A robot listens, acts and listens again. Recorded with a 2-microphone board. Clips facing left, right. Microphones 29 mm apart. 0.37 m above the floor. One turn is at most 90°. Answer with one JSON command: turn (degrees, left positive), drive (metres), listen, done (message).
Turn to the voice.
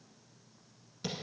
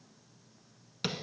{"listen": true}
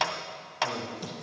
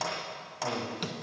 {"turn": -50}
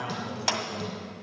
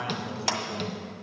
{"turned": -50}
{"turn": -10}
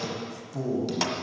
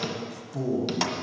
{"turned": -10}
{"done": "Found it: a man speaking, straight ahead."}